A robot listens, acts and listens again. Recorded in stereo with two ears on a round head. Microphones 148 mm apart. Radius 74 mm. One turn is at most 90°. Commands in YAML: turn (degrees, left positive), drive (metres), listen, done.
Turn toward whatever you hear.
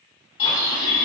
turn: 35
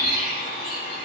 turn: 90
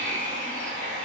turn: 45
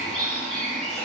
done: "Facing the bird."